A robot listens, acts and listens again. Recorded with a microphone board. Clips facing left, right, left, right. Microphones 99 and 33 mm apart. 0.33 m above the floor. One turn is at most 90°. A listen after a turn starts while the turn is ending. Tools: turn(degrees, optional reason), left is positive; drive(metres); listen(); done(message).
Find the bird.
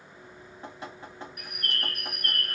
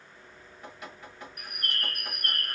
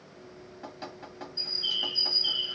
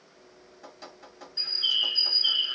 turn(degrees=-40, reason="The bird: about 40° right or 140° right.")
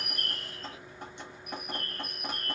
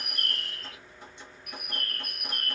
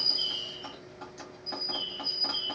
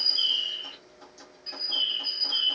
turn(degrees=-90, reason="So it is at 95° right.")
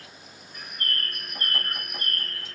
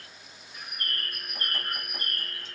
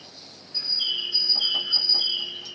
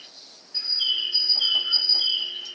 turn(degrees=-10, reason="The bird is now 10° right.")
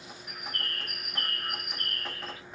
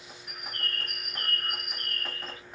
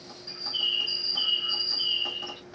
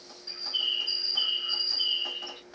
done("Found it: a bird, straight ahead, under 1 m away.")